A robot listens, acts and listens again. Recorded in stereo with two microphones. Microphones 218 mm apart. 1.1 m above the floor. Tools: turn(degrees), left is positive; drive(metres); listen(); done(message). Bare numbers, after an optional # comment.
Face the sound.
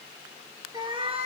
# The cat meowing: about 30° right or 150° right.
turn(-30)
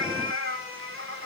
# So it is at 100° right.
turn(-100)
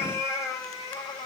# The cat meowing is now 20° left.
turn(20)
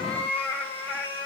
# The cat meowing is now 10° left.
turn(10)
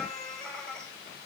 done("Found it: a cat meowing, straight ahead, 2 to 4 m away.")